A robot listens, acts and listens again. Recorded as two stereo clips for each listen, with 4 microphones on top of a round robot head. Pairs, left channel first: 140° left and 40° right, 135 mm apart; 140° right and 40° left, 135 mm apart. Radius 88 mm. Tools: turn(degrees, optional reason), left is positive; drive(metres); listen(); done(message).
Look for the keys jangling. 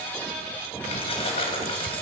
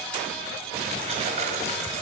turn(degrees=85, reason="The keys jangling: 85° left.")
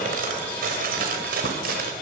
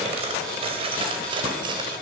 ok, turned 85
turn(degrees=-20, reason="The keys jangling is now 20° right.")
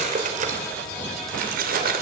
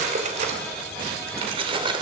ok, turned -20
turn(degrees=-20, reason="The keys jangling is now 20° right.")
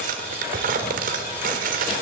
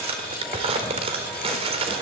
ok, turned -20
turn(degrees=-10, reason="The keys jangling is now 10° right.")
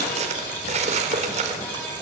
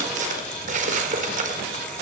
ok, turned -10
done("Facing the keys jangling.")